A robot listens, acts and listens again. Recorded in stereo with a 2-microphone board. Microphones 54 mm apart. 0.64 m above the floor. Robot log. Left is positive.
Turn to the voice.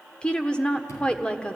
note: The woman speaking: about 20° left or 160° left.
cmd yaw +20
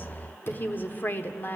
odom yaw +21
note: So it is at 140° left.
cmd yaw +140
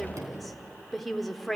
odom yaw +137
end: Facing the woman speaking, 1 to 2 m away.